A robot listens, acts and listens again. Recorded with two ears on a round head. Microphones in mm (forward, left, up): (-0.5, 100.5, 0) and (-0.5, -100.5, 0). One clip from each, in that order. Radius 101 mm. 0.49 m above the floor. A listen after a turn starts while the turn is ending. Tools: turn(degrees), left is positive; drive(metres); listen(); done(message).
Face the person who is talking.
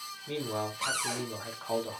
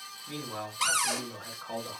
turn(degrees=30)
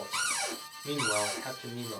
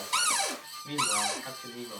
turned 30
turn(degrees=115)
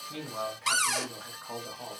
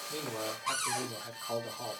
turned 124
turn(degrees=-10)
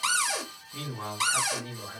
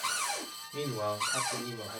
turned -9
done("Found it: a man speaking, straight ahead, 1 to 2 m away.")